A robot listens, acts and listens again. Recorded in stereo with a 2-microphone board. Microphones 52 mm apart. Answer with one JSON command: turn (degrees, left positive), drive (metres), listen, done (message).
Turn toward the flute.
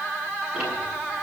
{"listen": true}
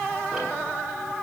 {"listen": true}
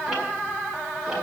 {"done": "I can't make out a flute."}